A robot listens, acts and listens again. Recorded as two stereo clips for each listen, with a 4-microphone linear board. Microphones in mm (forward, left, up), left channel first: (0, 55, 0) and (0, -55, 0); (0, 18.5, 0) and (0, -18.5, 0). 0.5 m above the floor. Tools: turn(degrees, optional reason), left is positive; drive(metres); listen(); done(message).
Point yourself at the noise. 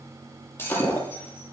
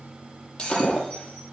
turn(degrees=25, reason="The breaking glass: about 25° left or 155° left.")
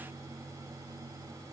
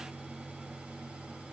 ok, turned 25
listen()
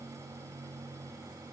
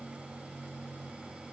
done("I heard breaking glass, but can't make it out now. It was about straight ahead or 130° left.")